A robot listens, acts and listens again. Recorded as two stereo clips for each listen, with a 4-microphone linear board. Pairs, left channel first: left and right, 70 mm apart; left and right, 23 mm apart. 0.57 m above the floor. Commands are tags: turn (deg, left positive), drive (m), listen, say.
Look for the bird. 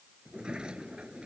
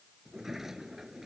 <listen/>
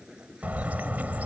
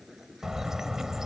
<turn deg="-25"/>
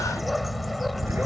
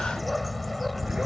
<say>Found it: a bird, straight ahead.</say>